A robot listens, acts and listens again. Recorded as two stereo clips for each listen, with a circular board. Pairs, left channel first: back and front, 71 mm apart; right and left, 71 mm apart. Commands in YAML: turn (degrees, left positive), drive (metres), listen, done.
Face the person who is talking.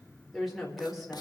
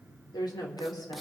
turn: -90
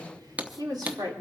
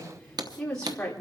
turn: -15
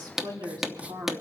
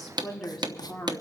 done: "Facing the woman speaking, 2 to 4 m away."